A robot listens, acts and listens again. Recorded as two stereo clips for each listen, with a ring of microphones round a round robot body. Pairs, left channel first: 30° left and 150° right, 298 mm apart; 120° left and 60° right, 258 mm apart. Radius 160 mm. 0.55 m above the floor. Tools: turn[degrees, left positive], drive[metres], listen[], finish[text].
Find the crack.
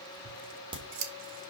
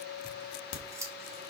Thought: The crack: 135° left.
Action: turn[135]
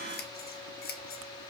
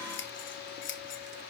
Action: finish[I heard a crack from this way, but can't make it out now.]